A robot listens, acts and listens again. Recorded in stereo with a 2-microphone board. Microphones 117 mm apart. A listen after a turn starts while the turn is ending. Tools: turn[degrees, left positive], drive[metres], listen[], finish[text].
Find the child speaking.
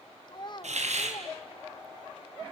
Thought: The child speaking: about 40° left or 140° left.
Action: turn[40]
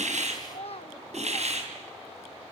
Thought: So it is at 95° left.
Action: turn[95]
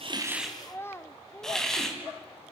Thought: The child speaking is now 25° left.
Action: turn[25]
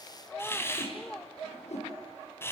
Thought: The child speaking is now 10° left.
Action: turn[10]
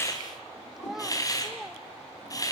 Action: finish[Facing the child speaking, under 1 m away.]